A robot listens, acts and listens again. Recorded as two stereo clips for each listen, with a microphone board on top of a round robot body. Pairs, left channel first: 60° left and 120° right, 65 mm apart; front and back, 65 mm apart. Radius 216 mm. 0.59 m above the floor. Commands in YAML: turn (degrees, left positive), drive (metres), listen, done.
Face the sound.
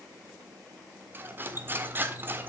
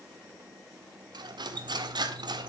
turn: 180
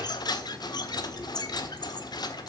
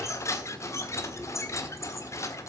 turn: 45
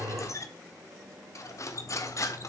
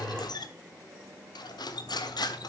turn: 15
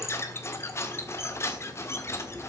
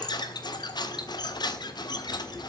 turn: 10
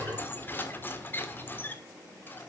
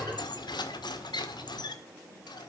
done: "Facing the cutlery clinking, 1 to 2 m away."